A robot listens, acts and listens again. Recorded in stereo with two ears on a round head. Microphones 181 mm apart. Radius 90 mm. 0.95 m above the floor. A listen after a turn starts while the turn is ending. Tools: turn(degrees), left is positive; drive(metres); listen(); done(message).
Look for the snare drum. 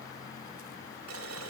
listen()
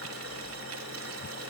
listen()
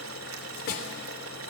turn(degrees=50)
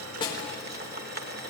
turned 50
listen()
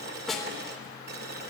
done("Found it: a snare drum, straight ahead, 2 to 4 m away.")